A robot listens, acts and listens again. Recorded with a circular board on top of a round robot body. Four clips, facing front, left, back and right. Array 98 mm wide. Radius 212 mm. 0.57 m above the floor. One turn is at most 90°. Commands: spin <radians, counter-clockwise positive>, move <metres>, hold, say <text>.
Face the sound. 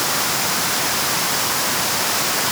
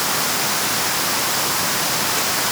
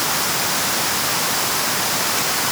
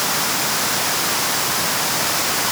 hold
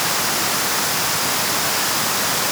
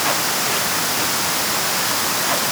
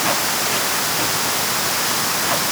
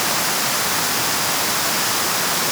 hold
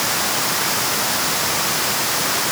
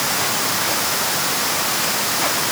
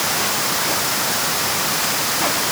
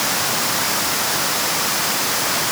say I can't make out anything.